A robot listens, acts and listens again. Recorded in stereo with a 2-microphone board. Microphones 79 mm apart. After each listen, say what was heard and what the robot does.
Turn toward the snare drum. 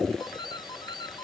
Keep listening.
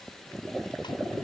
Keep listening.
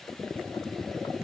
I can't make out a snare drum, only a doorbell.